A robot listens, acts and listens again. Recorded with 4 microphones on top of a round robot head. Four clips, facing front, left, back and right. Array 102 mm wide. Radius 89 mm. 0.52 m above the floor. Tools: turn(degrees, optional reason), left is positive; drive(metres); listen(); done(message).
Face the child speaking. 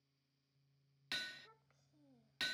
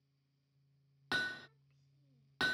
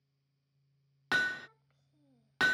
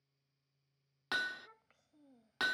turn(degrees=-85, reason="The child speaking: 85° right.")
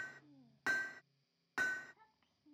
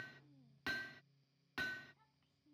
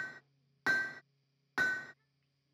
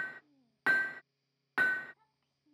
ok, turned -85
turn(degrees=-25, reason="The child speaking is now 25° right.")
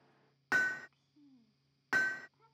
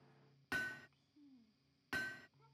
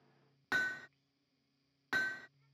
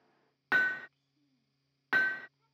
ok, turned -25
turn(degrees=10, reason="The child speaking is now 10° left.")
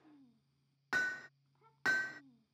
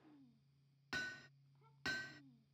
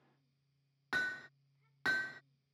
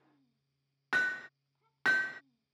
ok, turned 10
done("Facing the child speaking.")